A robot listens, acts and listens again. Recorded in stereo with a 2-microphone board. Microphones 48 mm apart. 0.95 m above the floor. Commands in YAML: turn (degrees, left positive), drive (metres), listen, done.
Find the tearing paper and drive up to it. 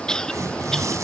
turn: -90
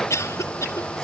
listen: true
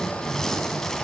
drive: 1.0
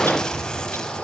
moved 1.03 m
turn: 15
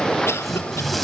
drive: 1.0
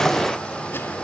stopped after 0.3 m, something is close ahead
listen: true
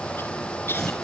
listen: true
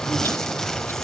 done: "Something is in my way. I am facing the tearing paper but have not reached it."